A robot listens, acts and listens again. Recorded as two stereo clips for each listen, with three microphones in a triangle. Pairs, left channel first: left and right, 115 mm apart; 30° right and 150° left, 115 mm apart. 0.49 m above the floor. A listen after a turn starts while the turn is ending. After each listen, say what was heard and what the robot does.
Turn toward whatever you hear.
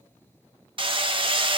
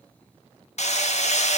The hammering: 45° right. Turn 45° right.
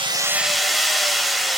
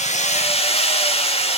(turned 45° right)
Found it: hammering, straight ahead.